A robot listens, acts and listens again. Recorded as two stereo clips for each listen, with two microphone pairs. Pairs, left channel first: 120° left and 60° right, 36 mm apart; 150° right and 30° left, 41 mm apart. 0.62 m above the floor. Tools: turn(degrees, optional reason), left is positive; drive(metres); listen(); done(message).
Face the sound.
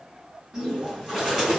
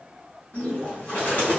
turn(degrees=-130, reason="The bird: 130° right.")
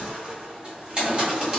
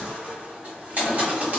done("Facing the bird, 1 to 2 m away.")